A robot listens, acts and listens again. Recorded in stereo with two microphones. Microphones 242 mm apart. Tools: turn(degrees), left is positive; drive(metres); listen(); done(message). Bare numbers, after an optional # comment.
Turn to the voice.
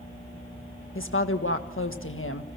# The woman speaking: about 55° left or 125° left.
turn(55)
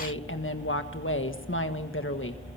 # So it is at 60° left.
turn(60)
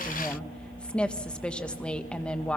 done("Facing the woman speaking, 1 to 2 m away.")